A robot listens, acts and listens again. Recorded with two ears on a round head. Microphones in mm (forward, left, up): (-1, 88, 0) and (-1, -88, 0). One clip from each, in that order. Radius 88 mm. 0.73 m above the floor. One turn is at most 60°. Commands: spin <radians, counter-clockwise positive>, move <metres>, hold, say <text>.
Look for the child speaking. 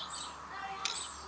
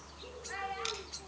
spin -1.05
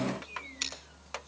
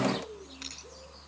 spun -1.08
hold
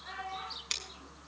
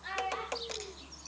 spin -0.87
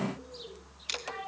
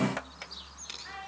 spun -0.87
say Facing the child speaking, over 4 m away.